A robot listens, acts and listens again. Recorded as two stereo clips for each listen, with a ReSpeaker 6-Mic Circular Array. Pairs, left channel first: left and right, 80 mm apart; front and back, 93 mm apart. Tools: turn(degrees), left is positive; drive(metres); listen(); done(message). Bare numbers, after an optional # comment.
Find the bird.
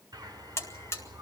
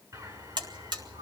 # The bird: 130° right.
turn(-130)
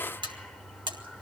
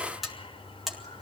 done("Facing the bird, over 4 m away.")